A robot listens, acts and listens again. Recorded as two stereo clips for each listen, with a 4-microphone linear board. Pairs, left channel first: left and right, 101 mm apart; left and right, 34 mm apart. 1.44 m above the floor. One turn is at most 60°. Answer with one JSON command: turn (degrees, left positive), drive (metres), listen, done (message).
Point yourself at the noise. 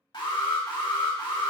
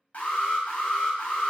{"turn": 50}
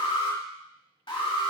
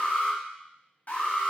{"turn": 60}
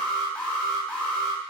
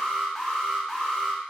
{"turn": 15}
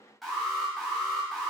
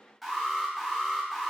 {"done": "Found it: an alarm, straight ahead."}